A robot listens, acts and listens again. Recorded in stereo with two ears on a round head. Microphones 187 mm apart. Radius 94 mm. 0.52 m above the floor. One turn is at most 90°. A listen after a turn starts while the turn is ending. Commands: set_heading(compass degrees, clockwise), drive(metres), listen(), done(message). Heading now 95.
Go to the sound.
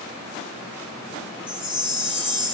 set_heading(65)
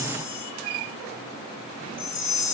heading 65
set_heading(335)
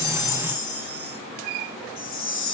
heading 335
set_heading(265)
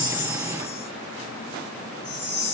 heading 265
set_heading(250)
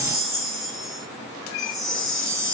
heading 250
drive(1.0)
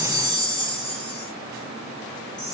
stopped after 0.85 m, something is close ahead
done("Arrived at the chime, straight ahead.")